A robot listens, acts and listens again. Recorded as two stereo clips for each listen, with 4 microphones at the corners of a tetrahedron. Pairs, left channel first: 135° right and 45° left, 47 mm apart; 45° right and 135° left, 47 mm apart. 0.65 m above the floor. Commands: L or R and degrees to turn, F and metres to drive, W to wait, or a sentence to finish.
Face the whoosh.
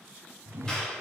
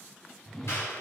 L30
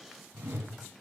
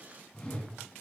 L15
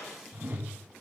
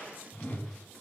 Facing the whoosh, 1 to 2 m away.